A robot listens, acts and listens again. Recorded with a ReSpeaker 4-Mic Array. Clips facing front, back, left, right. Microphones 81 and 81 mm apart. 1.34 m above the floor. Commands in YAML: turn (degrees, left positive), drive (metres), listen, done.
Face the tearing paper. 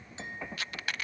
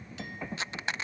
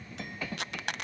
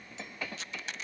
turn: 115
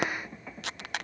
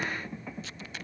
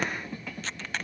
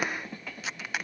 turn: -10
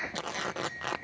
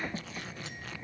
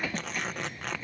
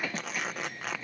done: "Facing the tearing paper."